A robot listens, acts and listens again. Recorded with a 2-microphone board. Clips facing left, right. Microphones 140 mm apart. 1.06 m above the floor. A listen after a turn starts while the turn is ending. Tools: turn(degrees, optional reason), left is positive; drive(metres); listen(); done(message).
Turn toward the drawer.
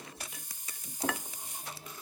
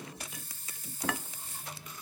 listen()
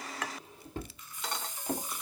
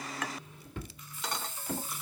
turn(degrees=35, reason="The drawer: about 35° left or 145° left.")
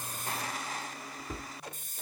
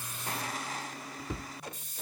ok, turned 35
done("Facing the drawer, 1 to 2 m away.")